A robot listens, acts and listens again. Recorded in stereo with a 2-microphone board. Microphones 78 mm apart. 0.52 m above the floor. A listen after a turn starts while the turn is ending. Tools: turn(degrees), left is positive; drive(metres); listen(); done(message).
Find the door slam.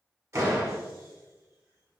turn(degrees=-35)
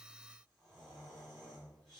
listen()
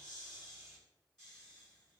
done("I heard a door slam, but can't make it out now. It was about straight ahead or 110° right.")